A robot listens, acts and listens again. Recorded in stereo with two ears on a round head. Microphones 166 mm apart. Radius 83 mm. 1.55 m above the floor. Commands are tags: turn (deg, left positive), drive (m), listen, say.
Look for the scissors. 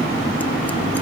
<listen/>
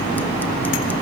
<listen/>
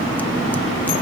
<say>I can't make out scissors.</say>